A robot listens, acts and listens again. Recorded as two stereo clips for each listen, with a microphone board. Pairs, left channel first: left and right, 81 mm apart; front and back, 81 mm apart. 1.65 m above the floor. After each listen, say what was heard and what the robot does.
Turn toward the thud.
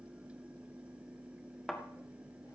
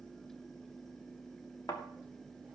Facing the thud, 1 to 2 m away.